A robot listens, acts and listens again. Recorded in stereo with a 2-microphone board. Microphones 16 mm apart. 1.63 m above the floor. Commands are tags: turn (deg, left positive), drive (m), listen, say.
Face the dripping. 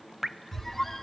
<turn deg="-20"/>
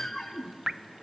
<turn deg="-140"/>
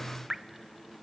<turn deg="-25"/>
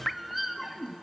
<turn deg="10"/>
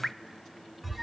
<say>Found it: dripping, straight ahead.</say>